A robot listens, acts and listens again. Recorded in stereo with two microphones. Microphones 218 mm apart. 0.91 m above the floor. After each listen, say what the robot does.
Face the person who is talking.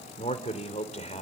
Turn 35° left.
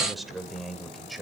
Found it: a man speaking, straight ahead.